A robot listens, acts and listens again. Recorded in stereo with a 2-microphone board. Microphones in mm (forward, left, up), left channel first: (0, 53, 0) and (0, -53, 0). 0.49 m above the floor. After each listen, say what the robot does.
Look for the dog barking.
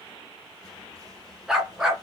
Turn 30° right.
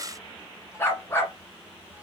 Turn 20° left.
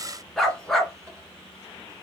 Found it: a dog barking, straight ahead, 1 to 2 m away.